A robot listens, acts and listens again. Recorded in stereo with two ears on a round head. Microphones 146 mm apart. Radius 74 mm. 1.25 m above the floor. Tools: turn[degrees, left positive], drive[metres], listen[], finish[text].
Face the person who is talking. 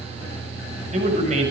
Thought: The man speaking: about 45° right or 135° right.
Action: turn[-45]
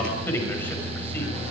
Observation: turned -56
Thought: So it is at 10° left.
Action: turn[10]
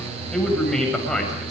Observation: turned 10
Action: finish[Found it: a man speaking, straight ahead.]